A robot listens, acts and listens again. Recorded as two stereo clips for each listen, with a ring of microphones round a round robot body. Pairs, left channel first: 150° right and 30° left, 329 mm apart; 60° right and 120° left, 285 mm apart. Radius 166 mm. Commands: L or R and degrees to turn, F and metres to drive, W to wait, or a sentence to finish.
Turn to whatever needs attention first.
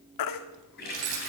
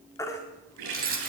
R140
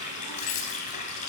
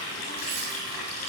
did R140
W
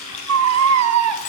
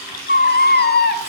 Facing the baby crying.